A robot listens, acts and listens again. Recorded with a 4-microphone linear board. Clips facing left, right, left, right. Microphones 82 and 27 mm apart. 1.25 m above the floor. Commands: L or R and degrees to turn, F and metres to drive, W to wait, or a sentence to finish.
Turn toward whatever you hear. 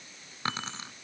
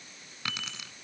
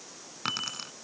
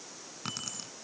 L35
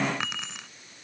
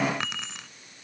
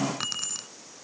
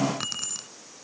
Found it: keys jangling, straight ahead.